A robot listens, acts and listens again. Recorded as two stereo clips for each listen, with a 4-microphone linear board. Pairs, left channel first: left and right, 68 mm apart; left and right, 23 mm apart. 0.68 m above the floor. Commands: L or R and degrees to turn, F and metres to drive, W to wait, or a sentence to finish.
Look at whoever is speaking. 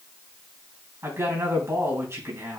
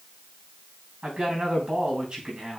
R40
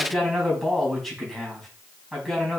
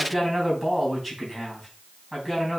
Found it: a man speaking, straight ahead.